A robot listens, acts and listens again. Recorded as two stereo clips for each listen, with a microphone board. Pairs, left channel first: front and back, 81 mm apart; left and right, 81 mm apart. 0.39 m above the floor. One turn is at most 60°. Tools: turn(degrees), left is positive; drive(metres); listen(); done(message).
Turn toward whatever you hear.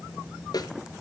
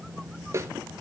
turn(degrees=-35)
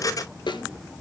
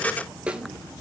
turn(degrees=-15)
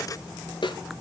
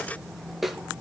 done("Facing the snare drum, 1 to 2 m away.")